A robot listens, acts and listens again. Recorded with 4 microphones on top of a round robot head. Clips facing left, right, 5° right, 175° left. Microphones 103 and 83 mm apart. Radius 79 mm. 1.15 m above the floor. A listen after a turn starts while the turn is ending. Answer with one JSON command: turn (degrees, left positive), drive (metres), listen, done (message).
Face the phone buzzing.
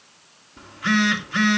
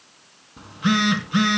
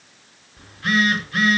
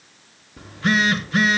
{"turn": -160}
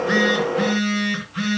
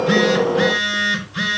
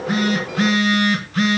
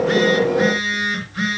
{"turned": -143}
{"turn": -20}
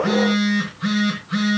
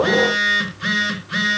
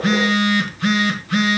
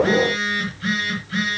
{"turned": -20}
{"done": "Found it: a phone buzzing, straight ahead, 2 to 4 m away."}